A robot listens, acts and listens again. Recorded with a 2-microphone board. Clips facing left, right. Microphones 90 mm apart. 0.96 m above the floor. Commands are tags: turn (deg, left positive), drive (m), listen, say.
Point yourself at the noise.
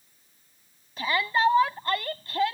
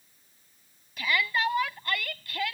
<turn deg="30"/>
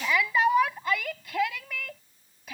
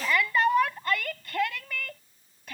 <say>Found it: a shout, straight ahead.</say>